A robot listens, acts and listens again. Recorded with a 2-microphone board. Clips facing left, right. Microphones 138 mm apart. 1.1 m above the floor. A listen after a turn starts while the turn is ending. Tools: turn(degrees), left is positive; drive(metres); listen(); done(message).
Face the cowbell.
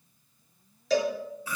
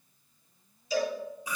turn(degrees=90)
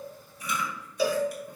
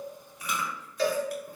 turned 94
done("Facing the cowbell.")